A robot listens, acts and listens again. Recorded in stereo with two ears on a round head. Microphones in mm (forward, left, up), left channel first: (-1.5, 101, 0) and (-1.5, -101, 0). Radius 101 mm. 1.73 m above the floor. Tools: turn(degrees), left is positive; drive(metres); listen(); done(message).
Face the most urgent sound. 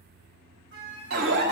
turn(degrees=-45)
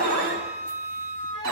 turn(degrees=-80)
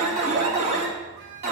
turn(degrees=-35)
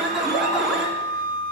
done("Facing the alarm, 2 to 4 m away.")